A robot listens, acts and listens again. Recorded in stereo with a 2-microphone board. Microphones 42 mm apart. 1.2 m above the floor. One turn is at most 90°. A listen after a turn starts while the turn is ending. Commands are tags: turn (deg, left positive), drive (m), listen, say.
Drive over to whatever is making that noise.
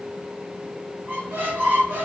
<turn deg="-40"/>
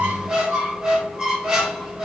<drive m="1.0"/>
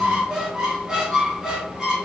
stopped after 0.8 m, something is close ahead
<turn deg="-15"/>
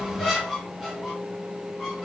<say>Arrived at the squeak, straight ahead.</say>